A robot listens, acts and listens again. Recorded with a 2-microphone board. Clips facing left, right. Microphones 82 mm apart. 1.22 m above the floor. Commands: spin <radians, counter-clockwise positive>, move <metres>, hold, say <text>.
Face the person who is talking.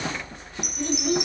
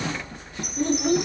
spin -0.79
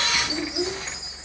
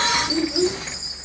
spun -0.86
spin -1.40
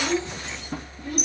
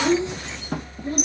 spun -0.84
spin -0.61
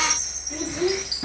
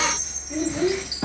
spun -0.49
say Found it: a child speaking, straight ahead, over 4 m away.